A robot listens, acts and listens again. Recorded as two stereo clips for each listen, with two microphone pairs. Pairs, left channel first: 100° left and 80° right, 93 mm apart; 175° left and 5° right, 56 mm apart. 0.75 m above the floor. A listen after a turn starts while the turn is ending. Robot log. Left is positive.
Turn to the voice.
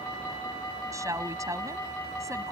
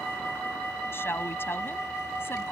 note: The woman speaking: 140° right.
cmd yaw -140
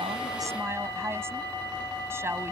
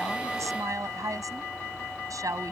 note: The woman speaking is now 20° right.
cmd yaw -20
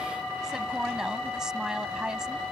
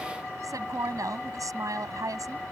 end: Facing the woman speaking.